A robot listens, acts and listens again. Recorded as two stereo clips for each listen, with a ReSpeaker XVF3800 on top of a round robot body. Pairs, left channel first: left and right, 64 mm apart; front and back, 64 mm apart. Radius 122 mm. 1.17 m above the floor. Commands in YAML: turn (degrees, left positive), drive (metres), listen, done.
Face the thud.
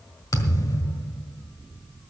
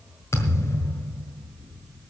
turn: 55
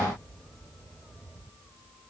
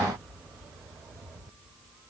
done: "Facing where the thud came from. I can't hear it now."